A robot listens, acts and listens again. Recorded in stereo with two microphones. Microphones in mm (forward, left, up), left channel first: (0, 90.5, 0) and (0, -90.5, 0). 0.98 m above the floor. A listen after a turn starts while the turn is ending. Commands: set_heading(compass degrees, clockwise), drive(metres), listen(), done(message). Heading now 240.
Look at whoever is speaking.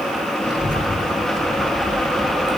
set_heading(150)
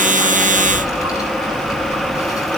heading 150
set_heading(135)
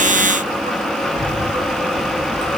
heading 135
done("Found it: a child speaking, straight ahead.")